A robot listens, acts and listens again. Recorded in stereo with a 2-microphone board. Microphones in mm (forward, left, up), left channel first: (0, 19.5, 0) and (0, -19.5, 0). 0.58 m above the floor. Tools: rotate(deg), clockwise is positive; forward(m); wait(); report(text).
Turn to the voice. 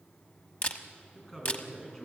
rotate(-30)
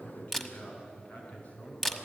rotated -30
rotate(-140)
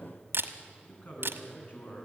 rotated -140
rotate(-50)
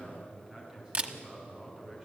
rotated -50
rotate(15)
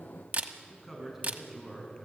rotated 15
report("Found it: a man speaking, straight ahead, over 4 m away.")